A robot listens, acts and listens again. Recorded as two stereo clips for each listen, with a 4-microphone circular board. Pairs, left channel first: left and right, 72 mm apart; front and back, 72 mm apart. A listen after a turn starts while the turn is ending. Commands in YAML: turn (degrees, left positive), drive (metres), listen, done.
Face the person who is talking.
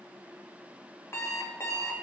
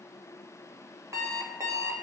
listen: true
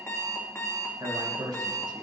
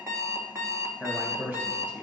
turn: -115
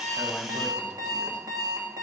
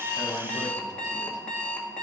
listen: true
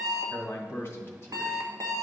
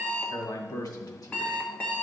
turn: 35
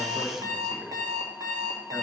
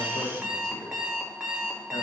listen: true
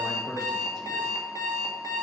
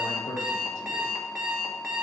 done: "Found it: a man speaking, straight ahead, 1 to 2 m away."